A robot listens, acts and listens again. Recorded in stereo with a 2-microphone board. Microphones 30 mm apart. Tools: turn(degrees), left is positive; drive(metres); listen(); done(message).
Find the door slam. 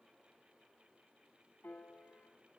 listen()
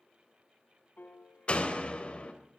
turn(degrees=40)
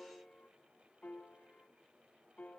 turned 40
listen()
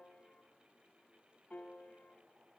done("I heard a door slam, but can't make it out now. It was about straight ahead or 100° left.")